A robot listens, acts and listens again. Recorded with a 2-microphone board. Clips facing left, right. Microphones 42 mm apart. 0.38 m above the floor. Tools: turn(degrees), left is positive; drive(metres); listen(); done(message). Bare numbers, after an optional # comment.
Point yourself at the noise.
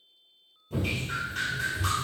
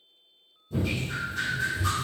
# The dripping: about 75° left or 105° left.
turn(75)
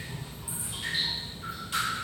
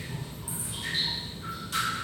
# So it is at 25° left.
turn(25)
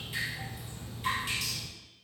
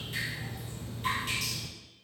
done("Found it: dripping, straight ahead.")